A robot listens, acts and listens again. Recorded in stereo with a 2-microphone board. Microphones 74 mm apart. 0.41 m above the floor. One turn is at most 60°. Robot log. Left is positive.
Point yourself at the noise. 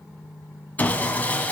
note: The sawing: about 20° left or 160° left.
cmd yaw +20
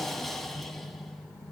end: Facing the sawing.